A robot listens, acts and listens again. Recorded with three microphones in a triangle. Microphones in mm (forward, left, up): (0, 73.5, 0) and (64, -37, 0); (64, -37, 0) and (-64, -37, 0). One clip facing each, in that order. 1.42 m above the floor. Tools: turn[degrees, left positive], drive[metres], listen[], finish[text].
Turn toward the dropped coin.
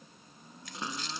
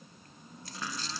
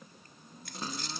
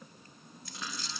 Thought: The dropped coin: 15° right.
Action: turn[-15]
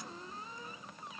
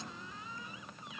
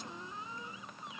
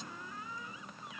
Action: finish[I heard a dropped coin from this way, but can't make it out now.]